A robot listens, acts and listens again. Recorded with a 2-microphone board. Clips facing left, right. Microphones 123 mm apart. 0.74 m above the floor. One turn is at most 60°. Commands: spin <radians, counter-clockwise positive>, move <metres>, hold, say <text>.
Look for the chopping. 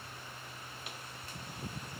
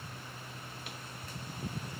hold
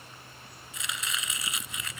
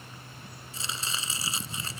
spin -0.52
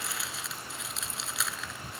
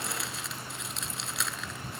say Facing the chopping.